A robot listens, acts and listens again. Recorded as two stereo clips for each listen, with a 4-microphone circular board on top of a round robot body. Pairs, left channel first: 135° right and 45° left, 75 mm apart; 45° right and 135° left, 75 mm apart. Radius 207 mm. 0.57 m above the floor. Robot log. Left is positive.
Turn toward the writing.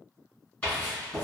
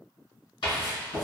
note: The writing: 65° right.
cmd yaw -65
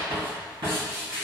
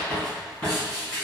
note: The writing is now 30° left.
cmd yaw +30
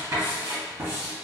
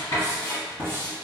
end: Facing the writing, 1 to 2 m away.